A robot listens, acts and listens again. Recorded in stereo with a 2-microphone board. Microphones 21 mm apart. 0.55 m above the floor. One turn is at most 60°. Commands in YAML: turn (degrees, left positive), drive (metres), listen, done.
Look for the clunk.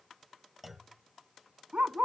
turn: -30
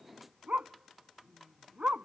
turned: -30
listen: true
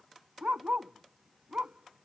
done: "I heard a clunk, but can't make it out now. It was about 25° left or 145° right."